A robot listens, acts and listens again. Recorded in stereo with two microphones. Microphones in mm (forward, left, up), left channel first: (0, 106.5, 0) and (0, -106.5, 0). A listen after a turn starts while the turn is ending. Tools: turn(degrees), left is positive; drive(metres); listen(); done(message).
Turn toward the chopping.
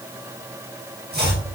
turn(degrees=-50)
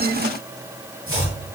turn(degrees=-80)
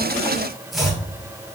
done("Found it: chopping, straight ahead.")